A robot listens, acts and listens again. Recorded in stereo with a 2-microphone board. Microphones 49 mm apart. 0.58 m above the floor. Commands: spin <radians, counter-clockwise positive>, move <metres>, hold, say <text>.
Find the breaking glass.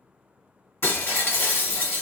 spin 0.96
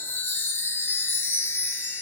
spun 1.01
hold
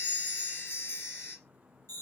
say I heard breaking glass, but can't make it out now. It was about 5° right or 70° left.